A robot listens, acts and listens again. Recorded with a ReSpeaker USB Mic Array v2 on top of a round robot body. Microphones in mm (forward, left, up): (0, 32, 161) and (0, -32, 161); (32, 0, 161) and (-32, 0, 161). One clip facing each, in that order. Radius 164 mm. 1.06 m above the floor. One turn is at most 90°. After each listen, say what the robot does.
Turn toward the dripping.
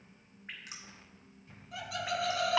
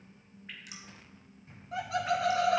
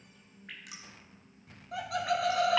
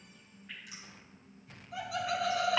Turn 30° left.
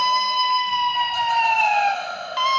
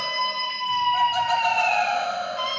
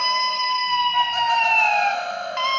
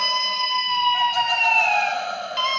Keep listening.
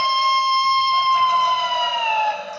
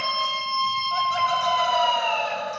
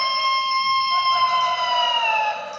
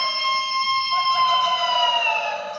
Keep listening.
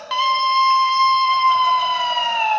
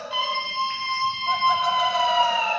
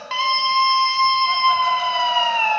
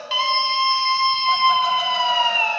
I heard dripping from this way, but can't make it out now.